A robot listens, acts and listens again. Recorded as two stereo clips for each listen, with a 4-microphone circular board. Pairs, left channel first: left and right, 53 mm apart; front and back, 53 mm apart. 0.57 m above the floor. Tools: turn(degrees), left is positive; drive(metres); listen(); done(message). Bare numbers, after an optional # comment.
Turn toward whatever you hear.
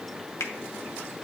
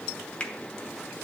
# The finger snap: 70° left.
turn(70)
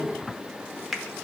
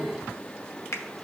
done("Found it: a finger snap, straight ahead, under 1 m away.")